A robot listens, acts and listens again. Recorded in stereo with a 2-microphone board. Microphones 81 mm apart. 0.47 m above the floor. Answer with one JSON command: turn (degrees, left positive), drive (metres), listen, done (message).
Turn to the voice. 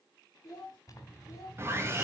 {"turn": 45}
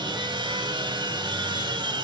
{"listen": true}
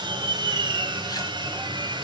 {"listen": true}
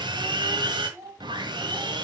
{"turn": -40}
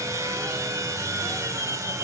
{"listen": true}
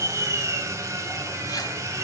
{"listen": true}
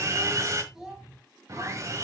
{"done": "Facing the child speaking."}